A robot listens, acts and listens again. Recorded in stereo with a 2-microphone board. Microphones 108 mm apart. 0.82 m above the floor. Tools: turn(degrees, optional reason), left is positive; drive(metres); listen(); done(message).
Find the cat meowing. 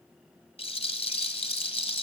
listen()
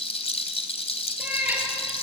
turn(degrees=-30)
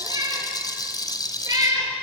turn(degrees=-150, reason="So it is at 150° right.")
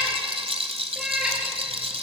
done("Found it: a cat meowing, straight ahead.")